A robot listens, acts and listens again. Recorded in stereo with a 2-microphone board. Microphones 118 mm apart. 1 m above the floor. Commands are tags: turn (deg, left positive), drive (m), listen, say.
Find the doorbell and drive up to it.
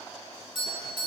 <turn deg="45"/>
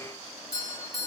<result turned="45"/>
<turn deg="85"/>
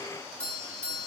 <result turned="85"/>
<turn deg="10"/>
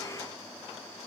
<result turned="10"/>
<listen/>
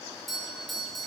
<drive m="1.0"/>
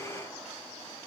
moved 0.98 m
<listen/>
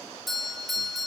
<drive m="1.0"/>
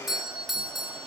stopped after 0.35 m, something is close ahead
<say>Arrived at the doorbell, straight ahead.</say>